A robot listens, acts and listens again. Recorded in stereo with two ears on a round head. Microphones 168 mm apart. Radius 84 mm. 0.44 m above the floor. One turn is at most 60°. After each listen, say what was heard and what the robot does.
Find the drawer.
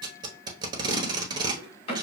The drawer: about 30° left or 150° left. Turn 30° left.
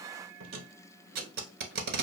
Keep listening.
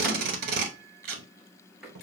Found it: a drawer, straight ahead.